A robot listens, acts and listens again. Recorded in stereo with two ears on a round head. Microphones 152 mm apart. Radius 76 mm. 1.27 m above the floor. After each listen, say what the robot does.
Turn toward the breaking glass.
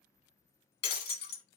Turn 65° left.
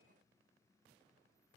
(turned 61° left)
Keep listening.
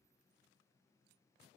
I heard breaking glass, but can't make it out now. It was about 5° left or 55° left.